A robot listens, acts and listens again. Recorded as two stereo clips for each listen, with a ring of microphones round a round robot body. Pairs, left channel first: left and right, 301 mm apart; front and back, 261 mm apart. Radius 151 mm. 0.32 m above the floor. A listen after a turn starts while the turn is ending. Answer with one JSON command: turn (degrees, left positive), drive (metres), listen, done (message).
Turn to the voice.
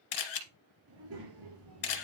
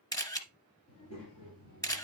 {"turn": -45}
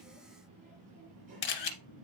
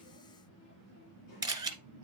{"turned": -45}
{"turn": -25}
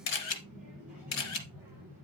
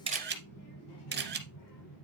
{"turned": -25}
{"done": "Facing the child speaking, over 4 m away."}